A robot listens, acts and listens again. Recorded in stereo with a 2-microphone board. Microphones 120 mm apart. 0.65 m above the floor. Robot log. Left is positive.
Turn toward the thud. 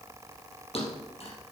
note: The thud: about 55° left or 125° left.
cmd yaw +55
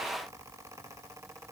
cmd idle
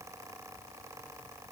end: I heard a thud, but can't make it out now. It was about straight ahead or 70° left.